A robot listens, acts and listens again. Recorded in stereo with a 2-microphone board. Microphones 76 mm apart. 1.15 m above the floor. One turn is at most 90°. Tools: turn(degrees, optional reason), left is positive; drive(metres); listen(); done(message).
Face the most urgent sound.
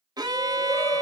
turn(degrees=35, reason="The shout: about 35° left or 145° left.")
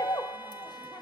turn(degrees=90, reason="So it is at 105° left.")
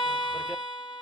turn(degrees=15, reason="Nothing new. It was at 15° left.")
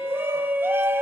turn(degrees=-30, reason="The shout is now 30° right.")
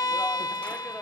listen()
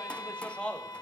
turn(degrees=15, reason="The shout is now 15° left.")
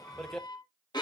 turn(degrees=10, reason="The shout is now 10° left.")
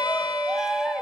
done("Facing the shout, under 1 m away.")